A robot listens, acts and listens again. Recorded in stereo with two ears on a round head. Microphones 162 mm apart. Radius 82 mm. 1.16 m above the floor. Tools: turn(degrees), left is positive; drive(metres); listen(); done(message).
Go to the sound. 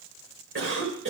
turn(degrees=-90)
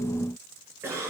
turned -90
turn(degrees=-15)
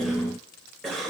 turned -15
drive(metres=1.0)
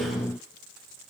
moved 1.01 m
listen()
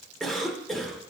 drive(metres=1.0)
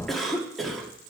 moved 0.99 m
drive(metres=1.0)
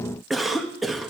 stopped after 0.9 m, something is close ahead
done("Arrived at the cough, straight ahead.")